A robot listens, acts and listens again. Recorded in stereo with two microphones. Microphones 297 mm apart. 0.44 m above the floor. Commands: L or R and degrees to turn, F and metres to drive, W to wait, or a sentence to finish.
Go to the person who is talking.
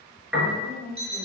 L30
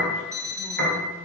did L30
W
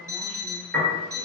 W
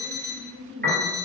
F1.0
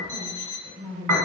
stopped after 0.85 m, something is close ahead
L20
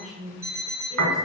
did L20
I am next to the woman speaking.